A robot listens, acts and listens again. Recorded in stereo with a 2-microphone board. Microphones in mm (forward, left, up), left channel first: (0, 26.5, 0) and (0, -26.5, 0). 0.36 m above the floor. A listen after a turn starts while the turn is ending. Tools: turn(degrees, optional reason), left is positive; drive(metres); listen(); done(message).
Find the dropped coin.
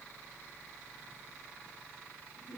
listen()
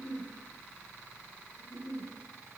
listen()
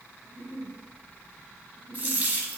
turn(degrees=-30, reason="The dropped coin: about 30° right or 150° right.")
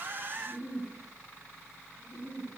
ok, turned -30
listen()
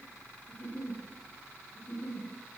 done("I heard a dropped coin, but can't make it out now. It was about straight ahead or 120° right.")